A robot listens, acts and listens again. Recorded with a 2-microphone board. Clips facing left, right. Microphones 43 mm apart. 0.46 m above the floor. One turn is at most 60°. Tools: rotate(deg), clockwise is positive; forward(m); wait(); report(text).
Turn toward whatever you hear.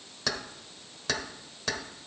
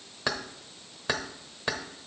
rotate(20)
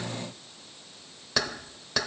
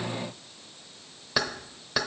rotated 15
rotate(10)
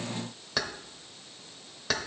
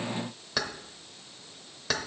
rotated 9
report("Facing the keys jangling, under 1 m away.")